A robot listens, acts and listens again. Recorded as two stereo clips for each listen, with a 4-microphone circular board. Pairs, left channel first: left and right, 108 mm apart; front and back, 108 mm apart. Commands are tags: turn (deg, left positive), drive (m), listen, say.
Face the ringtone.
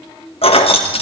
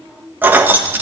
<listen/>
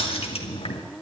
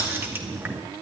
<listen/>
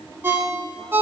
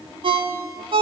<turn deg="-155"/>
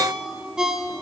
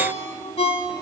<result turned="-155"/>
<say>Found it: a ringtone, straight ahead.</say>